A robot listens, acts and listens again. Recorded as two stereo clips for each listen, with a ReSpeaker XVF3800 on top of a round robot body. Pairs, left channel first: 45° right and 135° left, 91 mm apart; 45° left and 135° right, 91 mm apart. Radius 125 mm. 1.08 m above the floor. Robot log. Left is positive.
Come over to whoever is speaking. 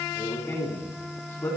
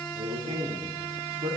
note: The man speaking: 115° right.
cmd yaw -115
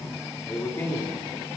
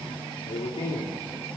note: The man speaking is now 20° left.
cmd yaw +20
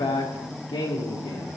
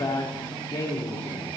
cmd fwd 1.0
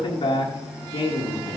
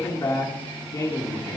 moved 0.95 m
note: The man speaking is now 15° right.
cmd yaw -15
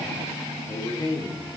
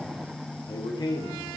cmd fwd 1.0
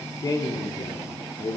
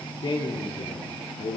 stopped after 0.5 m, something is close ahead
end: I am next to the man speaking.